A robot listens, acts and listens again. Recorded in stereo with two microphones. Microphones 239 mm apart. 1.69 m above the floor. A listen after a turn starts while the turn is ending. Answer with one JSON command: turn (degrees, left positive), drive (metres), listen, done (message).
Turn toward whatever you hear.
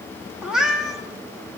{"turn": 30}
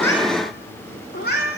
{"turn": 140}
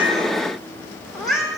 {"done": "Found it: a cat meowing, straight ahead."}